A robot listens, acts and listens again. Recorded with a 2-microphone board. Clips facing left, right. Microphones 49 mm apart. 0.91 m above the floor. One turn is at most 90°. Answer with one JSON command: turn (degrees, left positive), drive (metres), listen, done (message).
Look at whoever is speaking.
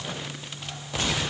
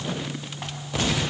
{"listen": true}
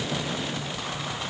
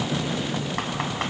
{"listen": true}
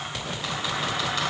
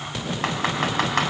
{"done": "I can't make out anyone speaking to turn to."}